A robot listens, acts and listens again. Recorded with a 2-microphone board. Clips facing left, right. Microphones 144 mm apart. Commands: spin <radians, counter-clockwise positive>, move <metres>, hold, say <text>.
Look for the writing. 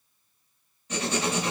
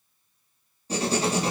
spin -0.61
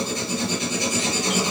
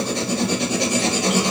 spin -1.92
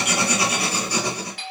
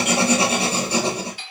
spin -0.44
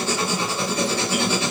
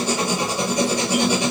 spin -0.26
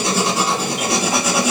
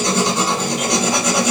say Found it: writing, straight ahead.